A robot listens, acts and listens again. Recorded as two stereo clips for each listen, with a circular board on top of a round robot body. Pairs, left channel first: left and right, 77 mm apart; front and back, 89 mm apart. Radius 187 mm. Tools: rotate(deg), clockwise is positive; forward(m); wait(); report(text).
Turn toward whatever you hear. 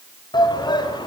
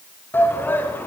rotate(-70)
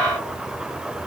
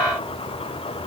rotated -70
wait()
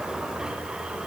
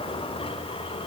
rotate(10)
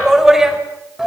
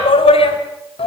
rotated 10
report("Found it: a shout, straight ahead.")